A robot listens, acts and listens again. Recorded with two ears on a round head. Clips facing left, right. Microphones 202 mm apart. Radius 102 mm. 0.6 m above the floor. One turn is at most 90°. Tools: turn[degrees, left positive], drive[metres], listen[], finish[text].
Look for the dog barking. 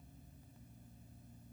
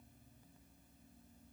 Action: listen[]
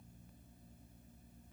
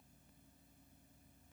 Action: listen[]
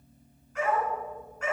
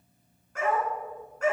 Thought: The dog barking: about 35° right or 145° right.
Action: turn[-35]
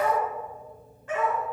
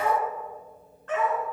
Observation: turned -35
Thought: So it is at 10° left.
Action: turn[10]
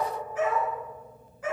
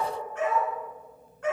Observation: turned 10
Action: finish[Found it: a dog barking, straight ahead.]